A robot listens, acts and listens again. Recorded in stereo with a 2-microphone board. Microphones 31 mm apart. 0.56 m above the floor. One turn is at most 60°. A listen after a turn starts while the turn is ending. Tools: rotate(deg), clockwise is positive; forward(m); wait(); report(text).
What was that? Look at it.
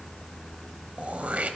rotate(50)
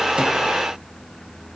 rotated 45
wait()
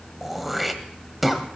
report("Facing the throat clearing, 1 to 2 m away.")